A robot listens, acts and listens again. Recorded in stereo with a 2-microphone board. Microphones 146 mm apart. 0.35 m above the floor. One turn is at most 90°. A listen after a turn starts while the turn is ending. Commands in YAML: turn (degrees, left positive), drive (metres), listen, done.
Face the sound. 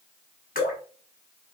turn: 75
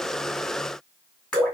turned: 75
turn: 10
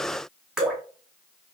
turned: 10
done: "Facing the dripping."